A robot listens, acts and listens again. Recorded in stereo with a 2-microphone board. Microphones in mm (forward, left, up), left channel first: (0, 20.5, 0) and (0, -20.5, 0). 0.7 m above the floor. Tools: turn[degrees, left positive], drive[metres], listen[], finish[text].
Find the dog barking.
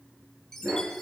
Thought: The dog barking: about 65° right or 115° right.
Action: turn[-65]
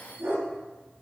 Thought: So it is at 55° right.
Action: turn[-55]
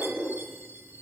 Thought: The dog barking is now 15° right.
Action: turn[-15]
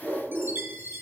Thought: The dog barking is now 10° right.
Action: turn[-10]
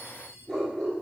Action: finish[Facing the dog barking.]